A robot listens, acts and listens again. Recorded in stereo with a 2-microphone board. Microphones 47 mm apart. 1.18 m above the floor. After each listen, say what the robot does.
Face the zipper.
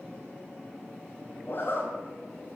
Turn 45° left.
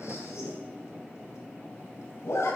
Turn 90° left.
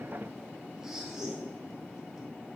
Turn 10° right.
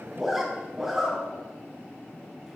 Found it: a zipper, straight ahead, over 4 m away.